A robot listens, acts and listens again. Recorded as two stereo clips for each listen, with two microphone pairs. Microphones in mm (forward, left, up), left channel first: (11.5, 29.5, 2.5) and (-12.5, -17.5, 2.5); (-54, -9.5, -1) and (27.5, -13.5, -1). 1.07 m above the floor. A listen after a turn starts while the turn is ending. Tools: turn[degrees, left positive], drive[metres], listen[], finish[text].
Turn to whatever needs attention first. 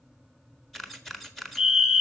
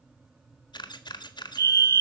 Thought: The fire alarm: 25° right.
Action: turn[-25]
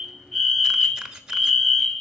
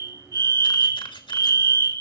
Thought: The fire alarm is now 10° right.
Action: turn[-10]
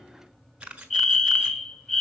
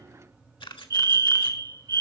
Action: finish[Found it: a fire alarm, straight ahead.]